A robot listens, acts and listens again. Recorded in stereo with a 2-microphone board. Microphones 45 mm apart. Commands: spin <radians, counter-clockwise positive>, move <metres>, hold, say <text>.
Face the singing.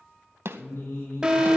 spin 1.22
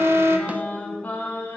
spin 0.61
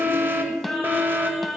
say Found it: singing, straight ahead, 2 to 4 m away.